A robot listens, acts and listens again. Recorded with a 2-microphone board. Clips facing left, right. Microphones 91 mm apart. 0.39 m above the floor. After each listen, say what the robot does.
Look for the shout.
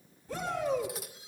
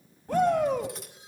Turn 65° right.
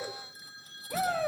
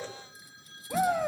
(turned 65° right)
Turn 15° right.
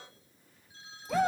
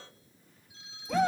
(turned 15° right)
Facing the shout, 2 to 4 m away.